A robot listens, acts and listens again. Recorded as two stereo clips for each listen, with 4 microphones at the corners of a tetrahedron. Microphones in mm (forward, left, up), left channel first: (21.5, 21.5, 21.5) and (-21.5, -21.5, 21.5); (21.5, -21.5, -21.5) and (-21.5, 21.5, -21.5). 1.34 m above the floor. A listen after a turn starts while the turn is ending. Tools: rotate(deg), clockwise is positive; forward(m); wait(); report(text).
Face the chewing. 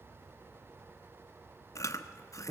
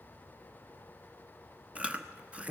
rotate(-65)
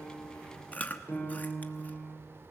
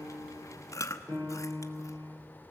rotate(15)
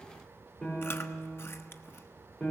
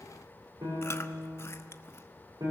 wait()
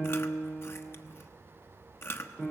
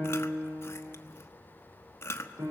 report("Facing the chewing.")